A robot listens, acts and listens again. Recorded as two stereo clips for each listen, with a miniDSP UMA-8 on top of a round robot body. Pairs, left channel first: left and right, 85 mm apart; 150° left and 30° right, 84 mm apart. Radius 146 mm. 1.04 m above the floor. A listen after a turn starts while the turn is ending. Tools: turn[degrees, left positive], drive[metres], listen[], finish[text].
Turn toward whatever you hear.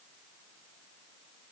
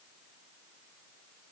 Action: listen[]
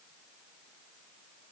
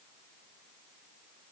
Action: listen[]
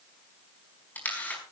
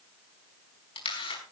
Thought: The camera shutter: 160° left.
Action: turn[160]
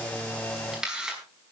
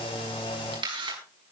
Action: finish[Found it: a camera shutter, straight ahead.]